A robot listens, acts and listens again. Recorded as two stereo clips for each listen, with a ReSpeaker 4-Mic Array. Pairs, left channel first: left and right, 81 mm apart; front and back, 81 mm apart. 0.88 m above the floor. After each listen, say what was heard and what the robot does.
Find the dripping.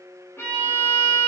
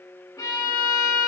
Keep listening.
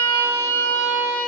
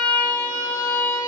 Keep listening.
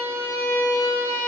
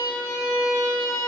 I can't make out dripping to turn to.